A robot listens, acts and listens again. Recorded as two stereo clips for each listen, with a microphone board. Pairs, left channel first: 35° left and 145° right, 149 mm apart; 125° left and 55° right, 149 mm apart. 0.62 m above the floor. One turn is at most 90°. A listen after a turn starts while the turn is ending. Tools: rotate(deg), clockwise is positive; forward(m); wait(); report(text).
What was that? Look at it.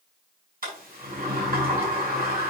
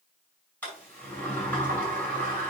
rotate(90)
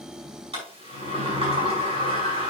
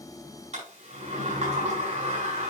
rotate(90)
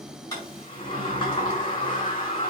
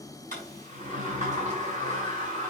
rotate(20)
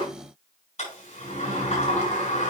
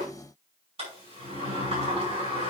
report("Facing the sliding door, over 4 m away.")